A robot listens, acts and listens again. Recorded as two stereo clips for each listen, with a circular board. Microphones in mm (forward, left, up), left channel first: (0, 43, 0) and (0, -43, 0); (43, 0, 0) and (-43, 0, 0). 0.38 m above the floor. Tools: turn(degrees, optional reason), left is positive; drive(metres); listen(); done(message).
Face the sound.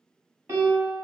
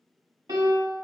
turn(degrees=-145, reason="The piano: 145° right.")
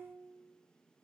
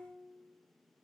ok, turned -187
turn(degrees=40, reason="Nothing new. It was at 40° left.")
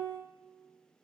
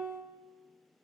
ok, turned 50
done("Facing the piano, 1 to 2 m away.")